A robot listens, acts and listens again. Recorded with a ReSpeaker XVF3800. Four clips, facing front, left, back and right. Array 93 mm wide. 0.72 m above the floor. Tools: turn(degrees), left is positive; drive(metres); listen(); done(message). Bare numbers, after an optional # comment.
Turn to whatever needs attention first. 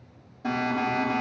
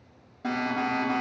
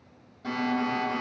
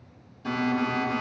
# The alarm: 80° left.
turn(80)
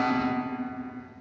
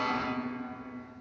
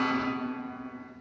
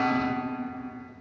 done("Found it: an alarm, straight ahead.")